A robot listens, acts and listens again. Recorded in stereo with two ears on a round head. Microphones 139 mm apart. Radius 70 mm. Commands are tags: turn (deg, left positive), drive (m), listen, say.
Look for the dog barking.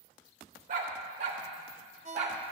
<turn deg="-40"/>
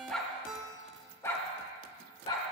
<turn deg="35"/>
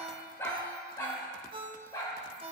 <turn deg="25"/>
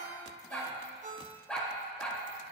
<turn deg="10"/>
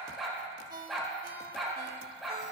<say>Found it: a dog barking, straight ahead, 2 to 4 m away.</say>